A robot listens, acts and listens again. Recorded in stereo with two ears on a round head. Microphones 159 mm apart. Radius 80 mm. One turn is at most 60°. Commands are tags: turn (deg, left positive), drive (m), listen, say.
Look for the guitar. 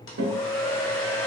<turn deg="-60"/>
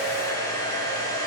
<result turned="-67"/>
<turn deg="-25"/>
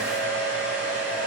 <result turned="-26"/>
<listen/>
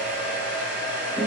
<say>Facing where the guitar came from. I can't hear it now.</say>